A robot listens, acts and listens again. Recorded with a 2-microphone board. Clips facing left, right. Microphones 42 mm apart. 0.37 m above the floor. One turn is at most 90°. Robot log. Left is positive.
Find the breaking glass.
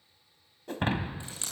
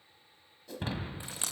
note: The breaking glass: about 50° left or 130° left.
cmd yaw +50
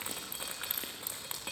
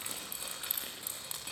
cmd idle
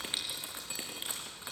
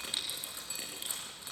end: I heard breaking glass, but can't make it out now. It was about straight ahead or 80° left.